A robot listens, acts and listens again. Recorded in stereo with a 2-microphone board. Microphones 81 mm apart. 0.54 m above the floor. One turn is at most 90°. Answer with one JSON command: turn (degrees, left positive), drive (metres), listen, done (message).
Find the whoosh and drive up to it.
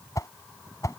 {"turn": 40}
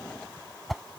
{"drive": 1.0}
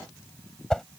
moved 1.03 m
{"turn": 10}
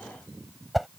{"drive": 1.0}
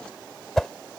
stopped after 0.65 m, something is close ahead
{"done": "I am next to the whoosh."}